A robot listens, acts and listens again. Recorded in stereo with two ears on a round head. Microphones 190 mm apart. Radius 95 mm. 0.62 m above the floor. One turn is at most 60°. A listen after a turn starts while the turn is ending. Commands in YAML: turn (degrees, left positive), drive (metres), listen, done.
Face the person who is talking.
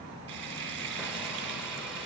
listen: true
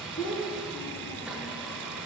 turn: 60
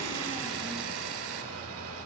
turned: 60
turn: 30
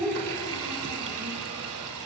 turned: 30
listen: true
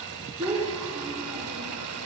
turn: -10
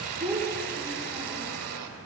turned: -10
done: "Found it: a child speaking, straight ahead, over 4 m away."